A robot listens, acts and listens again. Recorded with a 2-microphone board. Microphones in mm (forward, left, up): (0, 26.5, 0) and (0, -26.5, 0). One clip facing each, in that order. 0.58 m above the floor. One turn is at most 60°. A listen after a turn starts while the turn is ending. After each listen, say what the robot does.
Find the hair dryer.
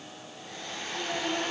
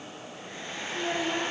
Turn 20° right.
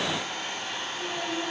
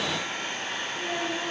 Turn 60° right.
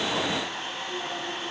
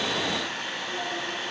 Turn 60° right.
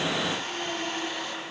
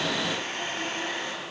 Turn 45° right.
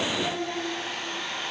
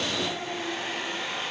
Turn 10° right.
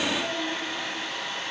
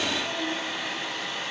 Found it: a hair dryer, straight ahead.